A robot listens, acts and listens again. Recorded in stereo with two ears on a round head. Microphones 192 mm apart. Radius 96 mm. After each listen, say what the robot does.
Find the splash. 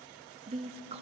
Keep listening.
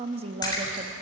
Turn 20° left.
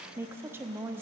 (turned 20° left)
Keep listening.
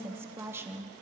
I heard a splash, but can't make it out now. It was about straight ahead or 140° left.